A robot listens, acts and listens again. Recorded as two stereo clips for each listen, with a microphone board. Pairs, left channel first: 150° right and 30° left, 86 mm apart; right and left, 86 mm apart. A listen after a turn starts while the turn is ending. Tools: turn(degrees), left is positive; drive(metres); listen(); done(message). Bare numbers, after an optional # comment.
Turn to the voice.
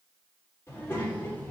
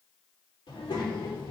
# The child speaking: 80° right.
turn(-80)
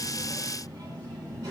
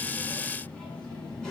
# The child speaking is now 10° right.
turn(-10)
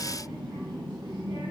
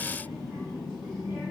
done("Found it: a child speaking, straight ahead, 2 to 4 m away.")